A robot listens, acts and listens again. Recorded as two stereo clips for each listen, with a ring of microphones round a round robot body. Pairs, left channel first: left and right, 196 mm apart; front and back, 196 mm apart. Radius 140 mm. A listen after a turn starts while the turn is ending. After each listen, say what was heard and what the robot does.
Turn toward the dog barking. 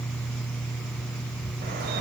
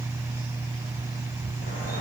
Keep listening.
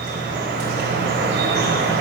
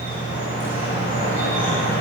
Keep listening.
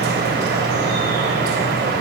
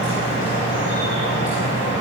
I can't make out a dog barking, only dripping.